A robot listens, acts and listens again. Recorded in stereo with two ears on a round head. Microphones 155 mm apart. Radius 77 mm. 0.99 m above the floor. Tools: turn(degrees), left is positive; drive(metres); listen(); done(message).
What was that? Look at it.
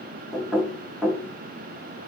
turn(degrees=30)
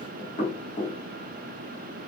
turn(degrees=145)
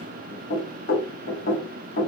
turn(degrees=55)
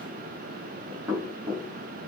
turn(degrees=-20)
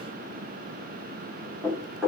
done("Facing the knocking, 1 to 2 m away.")